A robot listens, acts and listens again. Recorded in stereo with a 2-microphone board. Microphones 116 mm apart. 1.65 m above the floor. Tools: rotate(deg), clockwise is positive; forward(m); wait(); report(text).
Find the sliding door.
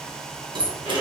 rotate(45)
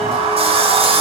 rotate(80)
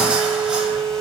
wait()
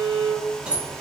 rotate(10)
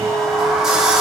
report("Found it: a sliding door, straight ahead.")